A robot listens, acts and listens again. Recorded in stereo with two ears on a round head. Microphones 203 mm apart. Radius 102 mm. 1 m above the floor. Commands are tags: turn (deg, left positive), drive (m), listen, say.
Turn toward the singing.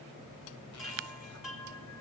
<listen/>
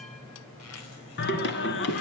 <turn deg="55"/>
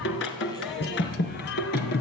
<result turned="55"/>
<turn deg="45"/>
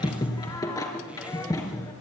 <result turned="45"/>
<turn deg="15"/>
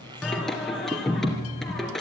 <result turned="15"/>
<say>Facing the singing, 2 to 4 m away.</say>